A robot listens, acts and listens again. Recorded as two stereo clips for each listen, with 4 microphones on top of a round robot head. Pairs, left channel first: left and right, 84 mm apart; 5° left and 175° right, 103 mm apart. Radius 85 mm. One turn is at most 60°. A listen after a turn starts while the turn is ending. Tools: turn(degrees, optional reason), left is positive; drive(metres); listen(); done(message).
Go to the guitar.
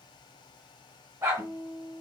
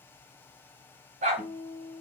turn(degrees=-60, reason="The guitar: 125° right.")
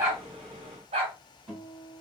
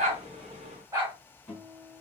turn(degrees=-60, reason="The guitar is now 70° right.")
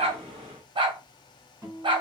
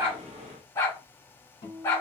turn(degrees=-30, reason="The guitar is now 30° right.")
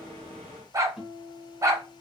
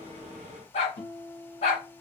drive(metres=1.0)
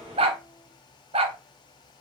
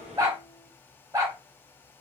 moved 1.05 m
drive(metres=1.0)
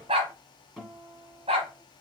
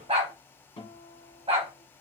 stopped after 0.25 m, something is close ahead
done("I am next to the guitar.")